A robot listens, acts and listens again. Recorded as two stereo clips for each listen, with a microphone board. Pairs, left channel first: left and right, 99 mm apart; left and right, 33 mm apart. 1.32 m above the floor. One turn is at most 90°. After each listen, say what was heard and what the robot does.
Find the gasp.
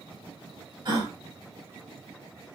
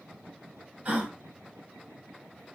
The gasp: about 45° right or 135° right. Turn 45° right.
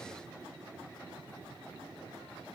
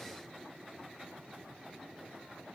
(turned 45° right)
Keep listening.
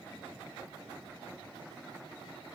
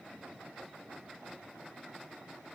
I heard a gasp, but can't make it out now. It was about straight ahead or 90° right.